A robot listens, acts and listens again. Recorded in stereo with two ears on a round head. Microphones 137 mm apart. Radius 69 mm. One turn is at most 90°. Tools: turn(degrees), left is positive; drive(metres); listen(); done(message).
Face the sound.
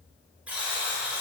turn(degrees=-30)
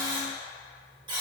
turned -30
turn(degrees=-90)
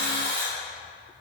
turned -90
turn(degrees=-85)
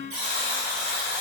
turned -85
turn(degrees=-50)
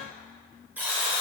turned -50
turn(degrees=-15)
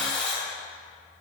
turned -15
done("Facing the buzzer, 1 to 2 m away.")